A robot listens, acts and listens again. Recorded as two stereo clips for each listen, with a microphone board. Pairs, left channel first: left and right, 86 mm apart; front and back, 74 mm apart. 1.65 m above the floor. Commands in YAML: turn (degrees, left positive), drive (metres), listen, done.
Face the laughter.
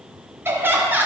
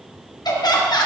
turn: -20
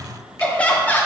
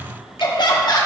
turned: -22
turn: 25
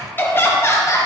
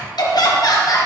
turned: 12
turn: 35
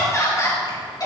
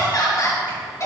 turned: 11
turn: 50
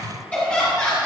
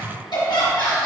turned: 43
turn: 20
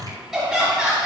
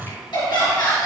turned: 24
done: "Found it: laughter, straight ahead."